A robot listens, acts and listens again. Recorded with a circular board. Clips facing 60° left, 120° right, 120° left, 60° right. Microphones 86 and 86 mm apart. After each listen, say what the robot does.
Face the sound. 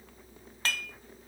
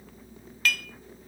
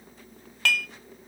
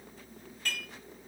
Turn 120° left.
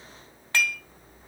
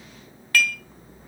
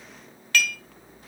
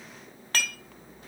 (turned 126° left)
Facing the dishes clattering.